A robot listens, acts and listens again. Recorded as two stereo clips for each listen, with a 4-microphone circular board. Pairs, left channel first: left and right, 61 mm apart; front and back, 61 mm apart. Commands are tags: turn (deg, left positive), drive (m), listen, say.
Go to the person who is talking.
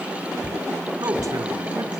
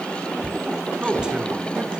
<turn deg="-105"/>
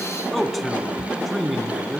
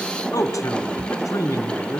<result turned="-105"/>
<drive m="1.0"/>
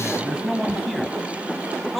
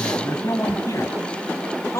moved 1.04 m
<drive m="1.0"/>
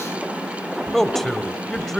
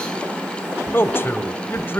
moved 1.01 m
<drive m="1.0"/>
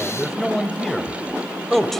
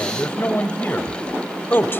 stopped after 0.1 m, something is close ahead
<say>I am next to the man speaking.</say>